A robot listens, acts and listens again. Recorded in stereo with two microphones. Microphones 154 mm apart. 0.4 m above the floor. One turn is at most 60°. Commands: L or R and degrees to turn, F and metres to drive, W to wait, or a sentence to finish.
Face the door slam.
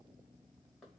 W
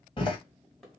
L30
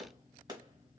W
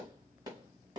I heard a door slam, but can't make it out now. It was about straight ahead or 120° left.